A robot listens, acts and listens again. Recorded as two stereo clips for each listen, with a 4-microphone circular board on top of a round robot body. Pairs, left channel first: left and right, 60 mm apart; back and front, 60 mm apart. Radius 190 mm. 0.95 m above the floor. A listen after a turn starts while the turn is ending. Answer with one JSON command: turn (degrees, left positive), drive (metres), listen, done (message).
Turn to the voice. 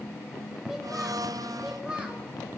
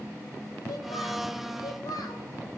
{"turn": -165}
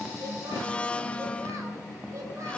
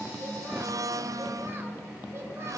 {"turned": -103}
{"turn": -65}
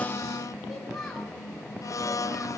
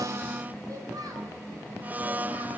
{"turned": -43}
{"done": "Found it: a child speaking, straight ahead."}